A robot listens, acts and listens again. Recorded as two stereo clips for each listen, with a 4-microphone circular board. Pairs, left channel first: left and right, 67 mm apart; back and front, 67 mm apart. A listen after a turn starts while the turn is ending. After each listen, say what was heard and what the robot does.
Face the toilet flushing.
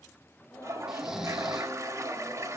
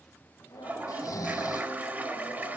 The toilet flushing: 60° right. Turn 60° right.
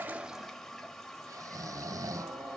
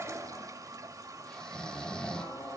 The toilet flushing is now 10° left. Turn 10° left.
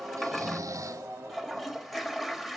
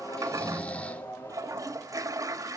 Facing the toilet flushing.